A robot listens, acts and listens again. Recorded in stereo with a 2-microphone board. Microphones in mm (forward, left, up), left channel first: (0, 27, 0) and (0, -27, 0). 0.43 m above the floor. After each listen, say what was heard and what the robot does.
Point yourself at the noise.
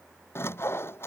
The sawing: about 50° left or 130° left. Turn 50° left.
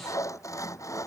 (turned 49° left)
So it is at 85° left. Turn 85° left.
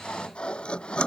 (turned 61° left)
The sawing is now 20° left. Turn 20° left.
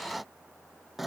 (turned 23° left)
Facing the sawing.